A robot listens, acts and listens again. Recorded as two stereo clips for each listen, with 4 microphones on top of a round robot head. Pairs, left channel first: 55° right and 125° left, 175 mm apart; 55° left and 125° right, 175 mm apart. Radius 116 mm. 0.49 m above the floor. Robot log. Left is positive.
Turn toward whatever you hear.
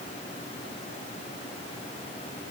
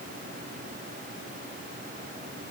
cmd idle
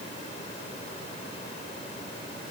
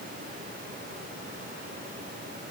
cmd idle
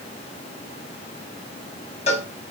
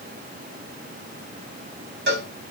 note: The cowbell: 105° right.
cmd yaw -105
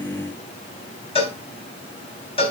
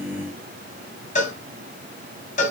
end: Facing the cowbell.